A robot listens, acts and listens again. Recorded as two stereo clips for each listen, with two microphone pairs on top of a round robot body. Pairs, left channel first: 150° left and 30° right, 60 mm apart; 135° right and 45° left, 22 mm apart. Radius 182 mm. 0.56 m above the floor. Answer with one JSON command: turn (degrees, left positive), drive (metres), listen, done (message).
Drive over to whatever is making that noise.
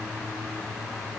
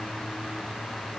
{"listen": true}
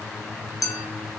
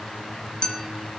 {"turn": 170}
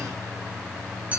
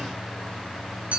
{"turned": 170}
{"turn": 35}
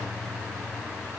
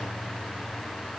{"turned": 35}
{"listen": true}
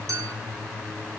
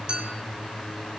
{"drive": 1.0}
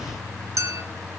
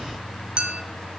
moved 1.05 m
{"drive": 1.0}
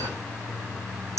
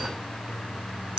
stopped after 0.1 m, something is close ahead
{"done": "Arrived at the clink, straight ahead."}